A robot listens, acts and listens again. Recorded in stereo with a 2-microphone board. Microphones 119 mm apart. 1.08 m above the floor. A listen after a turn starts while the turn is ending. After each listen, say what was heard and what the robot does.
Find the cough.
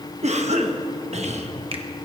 The cough: about 70° right or 110° right. Turn 70° right.
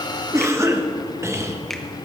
So it is at 25° right. Turn 25° right.
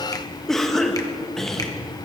Found it: a cough, straight ahead.